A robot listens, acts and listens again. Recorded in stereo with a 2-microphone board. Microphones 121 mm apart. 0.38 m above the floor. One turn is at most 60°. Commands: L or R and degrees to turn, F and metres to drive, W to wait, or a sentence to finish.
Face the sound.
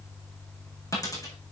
L30
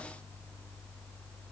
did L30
W
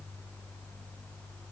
I heard a dropped coin, but can't make it out now. It was about straight ahead or 120° left.